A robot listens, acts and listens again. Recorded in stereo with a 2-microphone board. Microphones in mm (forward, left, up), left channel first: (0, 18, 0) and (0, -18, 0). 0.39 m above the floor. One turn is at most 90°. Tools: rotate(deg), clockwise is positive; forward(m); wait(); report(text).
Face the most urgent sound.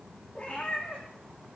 wait()
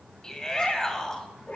rotate(-15)
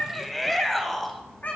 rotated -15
report("Found it: a shout, straight ahead, 2 to 4 m away.")